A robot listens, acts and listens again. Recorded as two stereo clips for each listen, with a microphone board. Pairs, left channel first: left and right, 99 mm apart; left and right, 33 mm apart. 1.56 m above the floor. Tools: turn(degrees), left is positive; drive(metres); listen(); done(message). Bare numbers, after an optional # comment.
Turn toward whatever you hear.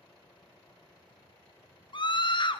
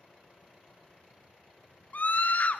# The scream: about 55° left or 125° left.
turn(55)
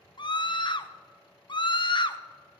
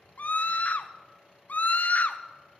# So it is at 60° left.
turn(60)
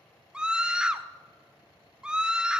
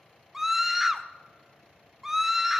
# The scream is now 10° right.
turn(-10)
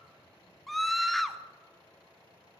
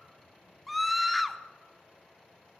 done("Found it: a scream, straight ahead.")